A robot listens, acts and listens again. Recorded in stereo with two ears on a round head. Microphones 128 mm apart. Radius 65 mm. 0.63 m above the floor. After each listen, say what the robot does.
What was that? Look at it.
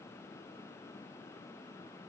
Keep listening.
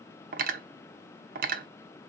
Turn 65° right.
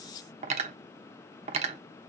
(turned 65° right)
Turn 45° right.
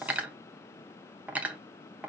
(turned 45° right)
Turn 10° right.
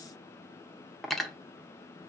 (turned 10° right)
Found it: cutlery clinking, straight ahead, under 1 m away.